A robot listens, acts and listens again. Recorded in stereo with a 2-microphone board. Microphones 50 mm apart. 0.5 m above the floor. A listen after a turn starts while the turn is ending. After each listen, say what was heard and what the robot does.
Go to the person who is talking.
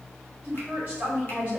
The woman speaking: about 25° right or 155° right. Turn 25° right.
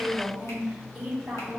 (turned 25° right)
Drive 1.0 m forward.
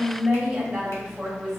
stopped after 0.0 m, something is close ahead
Something is in my way. I am facing the woman speaking but have not reached it.